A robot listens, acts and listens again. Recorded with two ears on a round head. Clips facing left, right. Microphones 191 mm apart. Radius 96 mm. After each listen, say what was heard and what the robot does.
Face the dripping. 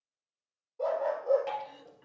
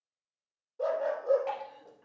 Turn 30° left.
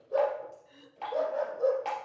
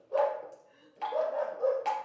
So it is at 20° right. Turn 20° right.
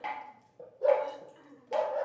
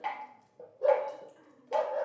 Found it: dripping, straight ahead.